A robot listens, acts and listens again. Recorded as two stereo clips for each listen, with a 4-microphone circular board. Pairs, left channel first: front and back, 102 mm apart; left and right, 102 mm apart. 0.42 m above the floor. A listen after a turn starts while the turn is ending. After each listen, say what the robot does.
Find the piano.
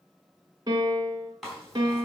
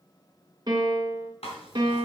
Turn 135° right.
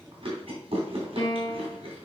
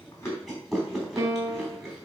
Turn 40° right.
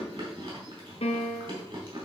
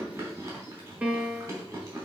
Turn 15° right.
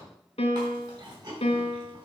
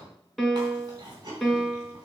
Found it: a piano, straight ahead.